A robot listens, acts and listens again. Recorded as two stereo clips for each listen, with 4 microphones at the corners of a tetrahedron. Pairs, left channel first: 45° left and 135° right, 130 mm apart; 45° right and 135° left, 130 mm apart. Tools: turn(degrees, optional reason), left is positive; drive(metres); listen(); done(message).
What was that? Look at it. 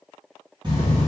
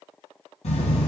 turn(degrees=-80, reason="The writing: 80° right.")
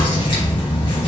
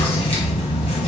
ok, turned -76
done("Found it: writing, straight ahead.")